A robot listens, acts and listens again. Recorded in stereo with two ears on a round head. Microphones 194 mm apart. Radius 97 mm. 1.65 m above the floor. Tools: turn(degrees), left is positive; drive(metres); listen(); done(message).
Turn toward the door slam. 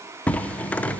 turn(degrees=30)
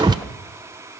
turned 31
turn(degrees=-25)
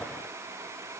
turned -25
done("Facing where the door slam came from. I can't hear it now.")